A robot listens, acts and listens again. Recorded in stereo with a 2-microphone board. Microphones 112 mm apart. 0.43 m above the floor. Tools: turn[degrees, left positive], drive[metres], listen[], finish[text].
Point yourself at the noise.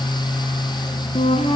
Thought: The flute: about 60° left or 120° left.
Action: turn[60]
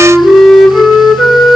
Action: finish[Facing the flute.]